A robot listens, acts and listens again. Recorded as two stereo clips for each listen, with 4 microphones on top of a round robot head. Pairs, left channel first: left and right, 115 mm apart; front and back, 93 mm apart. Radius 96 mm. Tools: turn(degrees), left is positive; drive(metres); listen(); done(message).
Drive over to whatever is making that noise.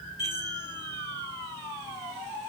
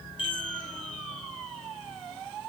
turn(degrees=25)
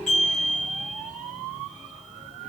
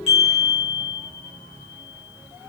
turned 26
drive(metres=1.0)
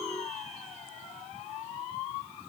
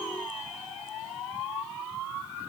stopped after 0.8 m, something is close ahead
done("Arrived at the chime, straight ahead.")